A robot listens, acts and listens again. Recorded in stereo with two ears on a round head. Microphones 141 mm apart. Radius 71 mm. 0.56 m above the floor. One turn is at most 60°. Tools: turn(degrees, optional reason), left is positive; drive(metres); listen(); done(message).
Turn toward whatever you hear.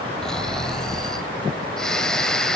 turn(degrees=30)
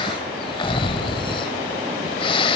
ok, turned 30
turn(degrees=60, reason="So it is at 145° left.")
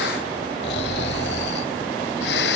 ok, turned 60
turn(degrees=60, reason="The snoring is now 85° left.")
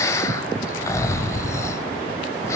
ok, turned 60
turn(degrees=20, reason="The snoring is now 20° left.")
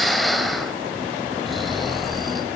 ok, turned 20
done("Facing the snoring.")